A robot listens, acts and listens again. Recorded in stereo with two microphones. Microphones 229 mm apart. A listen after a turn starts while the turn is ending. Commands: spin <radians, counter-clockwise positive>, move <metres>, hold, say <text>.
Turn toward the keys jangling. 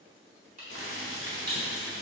spin -0.70
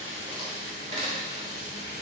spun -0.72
spin -0.79
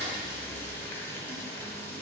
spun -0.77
spin -0.52
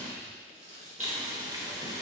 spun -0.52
spin -0.61
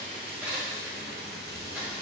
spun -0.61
say Facing the keys jangling, 1 to 2 m away.